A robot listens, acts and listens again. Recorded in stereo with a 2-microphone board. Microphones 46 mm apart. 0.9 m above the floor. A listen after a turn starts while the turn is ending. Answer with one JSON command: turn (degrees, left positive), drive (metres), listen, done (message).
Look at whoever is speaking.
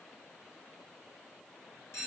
{"listen": true}
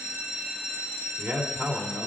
{"turn": -30}
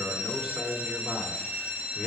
{"done": "Facing the man speaking."}